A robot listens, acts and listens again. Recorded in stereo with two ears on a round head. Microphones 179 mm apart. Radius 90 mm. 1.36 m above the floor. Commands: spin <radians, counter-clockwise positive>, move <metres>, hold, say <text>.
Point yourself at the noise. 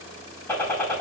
spin 0.52
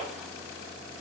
hold
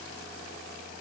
say I heard a gunshot, but can't make it out now. It was about 20° right or 140° left.